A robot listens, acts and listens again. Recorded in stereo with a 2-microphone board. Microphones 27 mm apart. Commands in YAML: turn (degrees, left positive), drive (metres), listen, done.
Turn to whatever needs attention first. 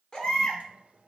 turn: 30
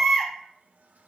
done: "Facing the baby crying, 1 to 2 m away."